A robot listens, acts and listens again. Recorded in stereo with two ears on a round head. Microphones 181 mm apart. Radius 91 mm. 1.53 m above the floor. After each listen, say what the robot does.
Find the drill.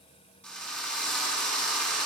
Turn 30° left.
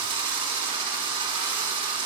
Turn 20° right.
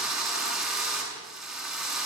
Found it: a drill, straight ahead.